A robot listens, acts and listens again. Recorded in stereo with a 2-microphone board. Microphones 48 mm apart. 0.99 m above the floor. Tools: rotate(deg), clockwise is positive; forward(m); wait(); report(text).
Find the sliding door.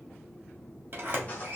rotate(45)
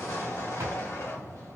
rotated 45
rotate(90)
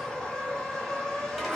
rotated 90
wait()
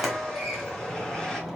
report("Facing the sliding door.")